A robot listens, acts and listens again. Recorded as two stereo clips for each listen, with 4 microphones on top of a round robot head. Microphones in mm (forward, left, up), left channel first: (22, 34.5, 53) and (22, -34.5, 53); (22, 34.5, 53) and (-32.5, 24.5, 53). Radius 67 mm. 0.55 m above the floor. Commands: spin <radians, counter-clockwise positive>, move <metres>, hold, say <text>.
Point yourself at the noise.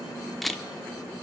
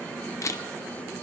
say Found it: a camera shutter, straight ahead, under 1 m away.